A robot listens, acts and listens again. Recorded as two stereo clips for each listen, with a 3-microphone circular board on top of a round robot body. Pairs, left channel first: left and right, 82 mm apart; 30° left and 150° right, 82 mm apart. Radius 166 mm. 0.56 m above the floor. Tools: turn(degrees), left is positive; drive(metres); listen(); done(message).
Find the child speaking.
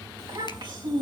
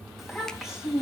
turn(degrees=-65)
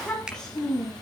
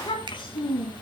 done("Found it: a child speaking, straight ahead, over 4 m away.")